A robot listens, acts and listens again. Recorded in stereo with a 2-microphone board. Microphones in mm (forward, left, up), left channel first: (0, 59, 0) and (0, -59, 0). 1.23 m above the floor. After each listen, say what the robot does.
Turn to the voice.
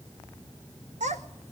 Turn 90° right.
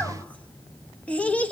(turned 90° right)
Turn 10° left.
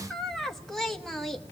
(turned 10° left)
Found it: a child speaking, straight ahead.